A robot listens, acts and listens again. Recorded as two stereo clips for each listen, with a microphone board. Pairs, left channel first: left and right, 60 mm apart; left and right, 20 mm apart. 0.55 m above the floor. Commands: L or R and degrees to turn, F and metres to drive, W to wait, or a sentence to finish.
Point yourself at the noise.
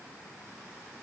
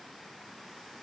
W
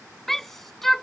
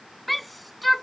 L30
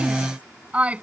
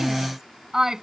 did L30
R25
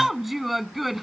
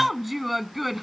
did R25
Facing the shout.